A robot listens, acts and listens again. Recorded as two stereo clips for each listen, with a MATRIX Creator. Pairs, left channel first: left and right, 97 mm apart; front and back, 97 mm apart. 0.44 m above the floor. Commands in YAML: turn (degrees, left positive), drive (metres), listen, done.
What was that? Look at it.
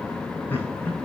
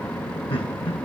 turn: 20
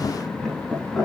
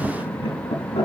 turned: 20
done: "Found it: laughter, straight ahead."